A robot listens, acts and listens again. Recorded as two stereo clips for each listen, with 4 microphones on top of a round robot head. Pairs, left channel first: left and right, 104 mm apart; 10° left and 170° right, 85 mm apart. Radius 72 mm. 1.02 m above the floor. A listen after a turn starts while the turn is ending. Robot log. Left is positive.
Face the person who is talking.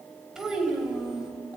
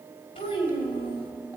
end: Facing the child speaking, over 4 m away.